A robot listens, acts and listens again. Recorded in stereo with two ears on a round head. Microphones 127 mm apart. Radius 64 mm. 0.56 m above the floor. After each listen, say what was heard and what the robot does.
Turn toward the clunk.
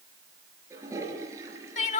Keep listening.
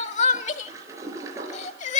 Keep listening.
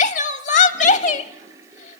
I can't make out a clunk, only crying and a toilet flushing.